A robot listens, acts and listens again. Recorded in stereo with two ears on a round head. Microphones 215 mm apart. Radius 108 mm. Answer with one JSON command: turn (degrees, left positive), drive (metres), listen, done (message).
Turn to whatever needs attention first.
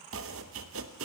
{"listen": true}
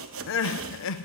{"turn": 55}
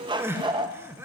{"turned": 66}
{"turn": -10}
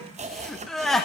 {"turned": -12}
{"done": "Found it: crying, straight ahead, under 1 m away."}